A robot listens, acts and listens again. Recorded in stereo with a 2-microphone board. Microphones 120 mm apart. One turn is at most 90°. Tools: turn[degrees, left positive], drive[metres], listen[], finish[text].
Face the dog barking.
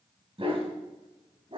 Thought: The dog barking: about 50° right or 130° right.
Action: turn[-50]
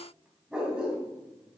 Thought: So it is at 10° right.
Action: turn[-10]
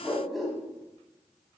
Action: finish[Facing the dog barking, 2 to 4 m away.]